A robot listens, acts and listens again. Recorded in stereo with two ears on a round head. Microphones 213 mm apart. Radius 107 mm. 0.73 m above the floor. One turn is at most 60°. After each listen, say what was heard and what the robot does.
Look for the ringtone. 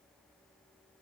Keep listening.
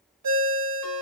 Turn 60° right.
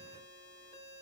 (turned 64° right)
Nothing new. It was at 25° right. Turn 25° right.
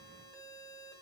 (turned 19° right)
Keep listening.
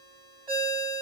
The ringtone is now 20° right. Turn 20° right.
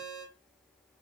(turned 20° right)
Found it: a ringtone, straight ahead.